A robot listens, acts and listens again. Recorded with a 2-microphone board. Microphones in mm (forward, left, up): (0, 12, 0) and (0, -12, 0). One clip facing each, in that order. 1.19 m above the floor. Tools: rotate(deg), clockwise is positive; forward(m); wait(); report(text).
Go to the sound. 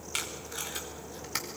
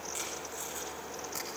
rotate(-90)
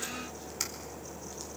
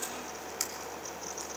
wait()
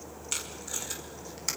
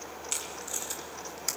forward(1.0)
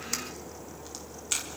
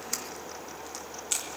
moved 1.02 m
forward(1.0)
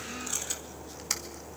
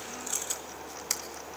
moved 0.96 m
forward(1.0)
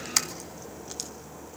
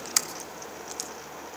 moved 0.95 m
forward(1.0)
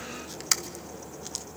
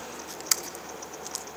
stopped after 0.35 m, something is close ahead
report("I am next to the tape being pulled.")